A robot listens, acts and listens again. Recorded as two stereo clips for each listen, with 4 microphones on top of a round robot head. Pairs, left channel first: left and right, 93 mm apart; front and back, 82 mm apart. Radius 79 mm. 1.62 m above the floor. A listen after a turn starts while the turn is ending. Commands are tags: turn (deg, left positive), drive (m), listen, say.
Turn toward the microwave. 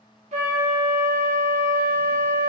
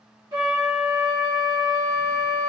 <listen/>
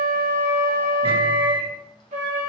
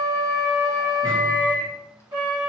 <turn deg="-60"/>
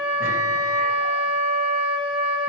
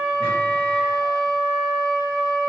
<listen/>
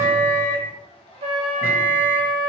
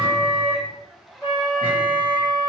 <turn deg="-25"/>
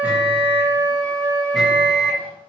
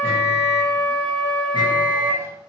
<say>Found it: a microwave, straight ahead.</say>